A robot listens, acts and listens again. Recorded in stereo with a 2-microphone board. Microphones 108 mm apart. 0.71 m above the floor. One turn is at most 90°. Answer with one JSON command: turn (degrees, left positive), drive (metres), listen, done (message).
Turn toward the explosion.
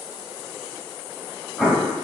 {"turn": -30}
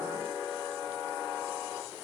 {"listen": true}
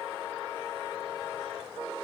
{"done": "I heard an explosion, but can't make it out now. It was about 25° left or 145° right."}